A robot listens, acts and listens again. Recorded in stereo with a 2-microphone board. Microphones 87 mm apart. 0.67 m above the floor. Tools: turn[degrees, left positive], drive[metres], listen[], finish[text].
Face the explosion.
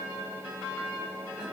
Action: listen[]
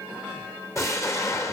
Thought: The explosion: about 35° left or 145° left.
Action: turn[35]
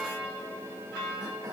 Action: listen[]
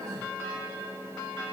Action: finish[I heard an explosion, but can't make it out now. It was about straight ahead or 110° left.]